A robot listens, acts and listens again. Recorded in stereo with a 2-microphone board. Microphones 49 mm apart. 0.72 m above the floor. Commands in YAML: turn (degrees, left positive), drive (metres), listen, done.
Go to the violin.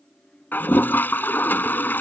listen: true
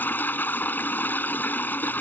listen: true
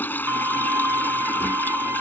turn: -90
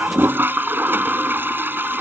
listen: true
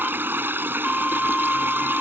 drive: 1.0
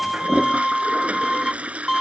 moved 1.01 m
drive: 1.0
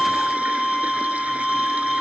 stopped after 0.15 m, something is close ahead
done: "I am next to the violin."